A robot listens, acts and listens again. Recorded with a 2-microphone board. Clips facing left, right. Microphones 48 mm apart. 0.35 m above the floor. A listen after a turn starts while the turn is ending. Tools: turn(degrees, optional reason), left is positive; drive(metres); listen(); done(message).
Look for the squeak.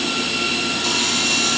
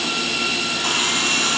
listen()
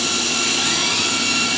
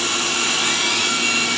listen()
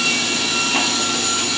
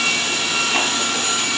done("I can't make out a squeak to turn to.")